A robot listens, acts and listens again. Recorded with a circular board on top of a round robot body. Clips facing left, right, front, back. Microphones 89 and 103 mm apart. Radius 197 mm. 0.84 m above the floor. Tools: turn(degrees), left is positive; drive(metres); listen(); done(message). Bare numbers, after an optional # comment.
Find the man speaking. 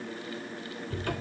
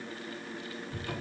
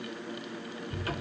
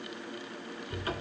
listen()
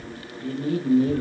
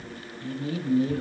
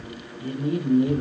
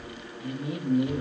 # The man speaking: 45° left.
turn(45)
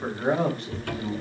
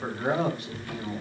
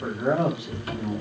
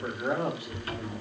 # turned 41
# The man speaking is now 10° right.
turn(-10)
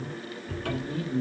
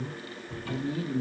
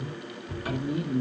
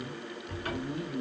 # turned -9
# The man speaking is now 10° right.
turn(-10)
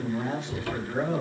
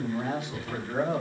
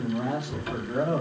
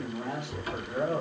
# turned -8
# The man speaking is now 15° right.
turn(-15)
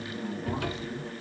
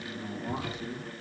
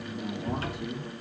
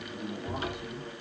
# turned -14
done("Found it: a man speaking, straight ahead, 2 to 4 m away.")